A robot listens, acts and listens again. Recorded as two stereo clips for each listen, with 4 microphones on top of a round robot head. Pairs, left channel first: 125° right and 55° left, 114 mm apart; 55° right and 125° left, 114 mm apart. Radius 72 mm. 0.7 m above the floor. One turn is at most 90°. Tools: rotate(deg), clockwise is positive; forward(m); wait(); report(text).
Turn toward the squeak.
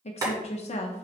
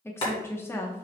wait()
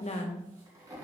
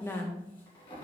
wait()
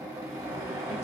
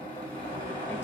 report("I can't make out a squeak to turn to.")